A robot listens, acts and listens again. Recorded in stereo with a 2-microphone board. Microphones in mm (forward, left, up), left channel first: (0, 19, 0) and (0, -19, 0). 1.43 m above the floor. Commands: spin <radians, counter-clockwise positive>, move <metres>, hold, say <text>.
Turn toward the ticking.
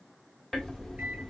spin 0.52
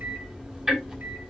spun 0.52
spin -0.44
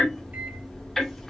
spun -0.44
say Facing the ticking.